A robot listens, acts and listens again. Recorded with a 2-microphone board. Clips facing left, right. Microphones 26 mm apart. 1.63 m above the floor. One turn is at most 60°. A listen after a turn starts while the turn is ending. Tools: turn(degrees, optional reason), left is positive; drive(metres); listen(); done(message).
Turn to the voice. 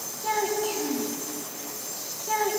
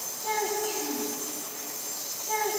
turn(degrees=40, reason="The child speaking: about 40° left or 140° left.")
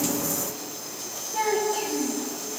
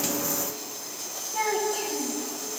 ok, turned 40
done("Facing the child speaking.")